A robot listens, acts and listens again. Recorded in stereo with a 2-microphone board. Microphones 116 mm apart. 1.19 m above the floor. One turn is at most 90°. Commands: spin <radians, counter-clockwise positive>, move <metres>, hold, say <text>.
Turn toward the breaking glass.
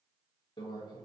hold
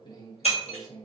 spin 1.05
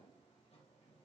hold
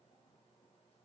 say I heard breaking glass, but can't make it out now. It was about straight ahead or 60° left.